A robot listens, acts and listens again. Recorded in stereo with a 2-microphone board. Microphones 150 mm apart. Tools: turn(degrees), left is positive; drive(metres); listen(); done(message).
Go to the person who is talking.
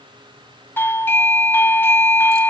listen()
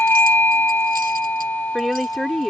turn(degrees=30)
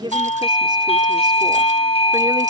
turn(degrees=-30)
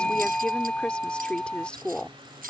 drive(metres=1.0)
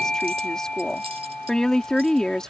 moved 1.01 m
drive(metres=1.0)
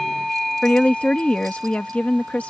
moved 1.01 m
turn(degrees=10)
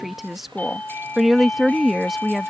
drive(metres=1.0)
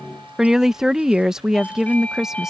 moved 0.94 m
drive(metres=1.0)
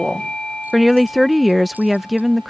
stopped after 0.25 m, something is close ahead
done("I am next to the woman speaking.")